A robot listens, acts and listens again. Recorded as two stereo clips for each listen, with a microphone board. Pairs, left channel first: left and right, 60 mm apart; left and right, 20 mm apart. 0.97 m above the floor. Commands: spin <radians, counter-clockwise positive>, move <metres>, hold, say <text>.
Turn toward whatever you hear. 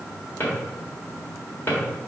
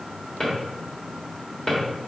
spin 0.61
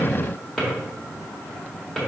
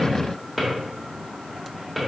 say Found it: a drawer, straight ahead.